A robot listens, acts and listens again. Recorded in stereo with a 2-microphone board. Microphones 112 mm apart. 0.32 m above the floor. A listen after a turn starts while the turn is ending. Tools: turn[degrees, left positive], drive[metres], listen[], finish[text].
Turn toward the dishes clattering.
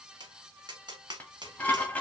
Action: turn[30]
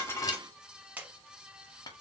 Action: listen[]
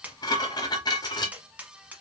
Thought: So it is at 135° left.
Action: turn[135]
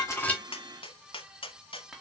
Action: listen[]
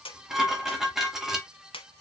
Action: finish[Found it: dishes clattering, straight ahead.]